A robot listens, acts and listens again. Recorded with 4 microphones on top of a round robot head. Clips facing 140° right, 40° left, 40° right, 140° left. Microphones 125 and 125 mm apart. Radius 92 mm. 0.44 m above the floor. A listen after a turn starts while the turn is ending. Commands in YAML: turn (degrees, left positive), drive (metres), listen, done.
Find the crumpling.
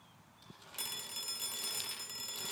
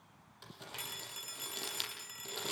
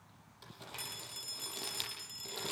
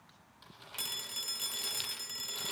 turn: 10
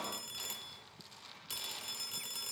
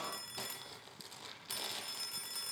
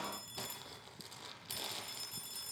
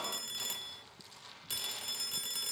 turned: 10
done: "Found it: crumpling, straight ahead."